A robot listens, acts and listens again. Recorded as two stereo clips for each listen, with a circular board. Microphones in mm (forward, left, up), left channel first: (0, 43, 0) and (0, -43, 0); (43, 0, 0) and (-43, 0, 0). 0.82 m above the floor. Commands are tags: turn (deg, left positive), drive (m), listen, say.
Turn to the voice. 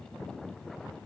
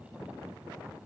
<listen/>
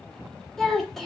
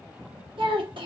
<turn deg="180"/>
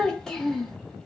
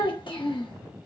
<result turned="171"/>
<say>Facing the child speaking, under 1 m away.</say>